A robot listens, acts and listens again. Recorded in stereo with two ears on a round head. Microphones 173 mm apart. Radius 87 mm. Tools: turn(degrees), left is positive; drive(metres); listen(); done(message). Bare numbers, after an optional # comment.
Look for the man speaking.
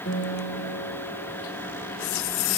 listen()
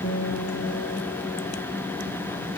listen()
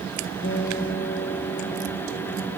done("I can't make out a man speaking, only a guitar.")